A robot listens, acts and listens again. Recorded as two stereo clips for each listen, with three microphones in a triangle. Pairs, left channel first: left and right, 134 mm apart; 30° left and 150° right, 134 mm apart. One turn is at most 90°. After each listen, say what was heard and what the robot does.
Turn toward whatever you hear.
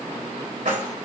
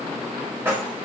The keys jangling: 75° right. Turn 75° right.
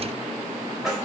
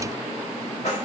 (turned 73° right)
Found it: keys jangling, straight ahead.